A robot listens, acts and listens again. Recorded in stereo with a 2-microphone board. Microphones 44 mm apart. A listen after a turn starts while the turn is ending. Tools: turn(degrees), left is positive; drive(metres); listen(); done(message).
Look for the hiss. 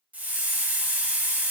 turn(degrees=-40)
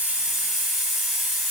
turn(degrees=-10)
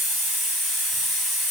done("Facing the hiss, under 1 m away.")